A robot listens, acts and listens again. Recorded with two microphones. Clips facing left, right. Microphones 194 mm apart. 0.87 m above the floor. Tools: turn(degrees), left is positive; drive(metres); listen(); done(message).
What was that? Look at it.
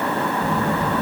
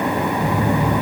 turn(degrees=-30)
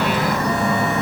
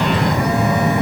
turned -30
turn(degrees=-120)
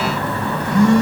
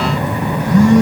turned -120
turn(degrees=-45)
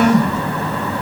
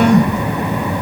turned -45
done("Facing the phone buzzing, 2 to 4 m away.")